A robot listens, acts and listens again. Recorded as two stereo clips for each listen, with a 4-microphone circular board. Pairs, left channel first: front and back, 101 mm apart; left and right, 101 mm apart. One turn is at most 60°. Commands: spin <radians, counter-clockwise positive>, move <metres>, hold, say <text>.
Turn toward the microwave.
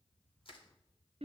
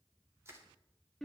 hold
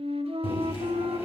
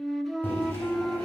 spin 0.35
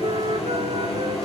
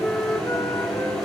say Found it: a microwave, straight ahead.